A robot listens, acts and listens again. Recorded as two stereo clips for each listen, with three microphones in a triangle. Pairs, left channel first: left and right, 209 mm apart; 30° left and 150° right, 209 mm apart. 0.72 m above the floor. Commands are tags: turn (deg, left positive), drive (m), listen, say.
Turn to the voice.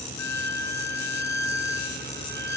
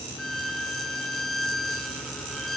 <listen/>
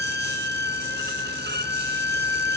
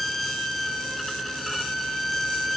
<listen/>
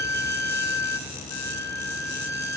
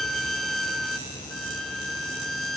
<say>I can't make out anyone speaking, only a violin.</say>